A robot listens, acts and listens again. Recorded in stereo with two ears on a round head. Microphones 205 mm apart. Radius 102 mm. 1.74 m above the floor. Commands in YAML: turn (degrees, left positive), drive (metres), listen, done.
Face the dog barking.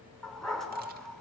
turn: 30
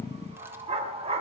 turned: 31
turn: -25
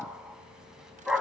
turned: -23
done: "Found it: a dog barking, straight ahead, 2 to 4 m away."